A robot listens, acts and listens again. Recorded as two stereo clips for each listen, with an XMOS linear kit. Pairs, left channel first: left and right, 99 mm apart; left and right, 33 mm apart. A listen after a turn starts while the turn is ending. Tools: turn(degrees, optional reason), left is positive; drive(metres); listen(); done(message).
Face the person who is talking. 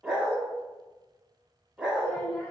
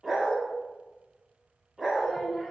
turn(degrees=20, reason="The child speaking: about 20° left or 160° left.")
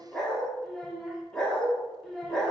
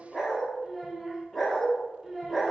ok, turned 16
done("Facing the child speaking.")